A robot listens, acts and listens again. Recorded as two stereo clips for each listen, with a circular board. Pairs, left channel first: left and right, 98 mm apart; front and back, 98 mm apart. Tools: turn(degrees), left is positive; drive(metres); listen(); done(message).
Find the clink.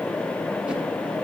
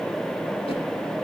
listen()
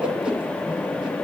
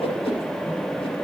listen()
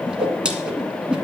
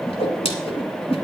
done("I can't make out a clink, only a whoosh.")